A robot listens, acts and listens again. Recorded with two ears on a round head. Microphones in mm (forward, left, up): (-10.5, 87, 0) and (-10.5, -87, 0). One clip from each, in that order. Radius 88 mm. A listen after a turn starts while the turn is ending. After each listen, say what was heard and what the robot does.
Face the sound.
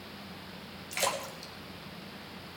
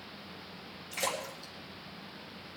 The splash: about 65° left or 115° left. Turn 65° left.
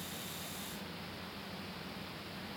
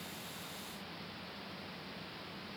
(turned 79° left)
Keep listening.
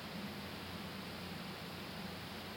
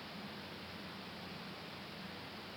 I heard a splash, but can't make it out now. It was about 15° right or 35° left.